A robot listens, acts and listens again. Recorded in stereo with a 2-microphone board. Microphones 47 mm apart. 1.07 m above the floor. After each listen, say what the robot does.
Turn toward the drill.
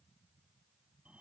Keep listening.
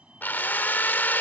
Turn 45° left.
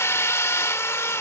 Turn 85° left.
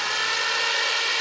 Facing the drill.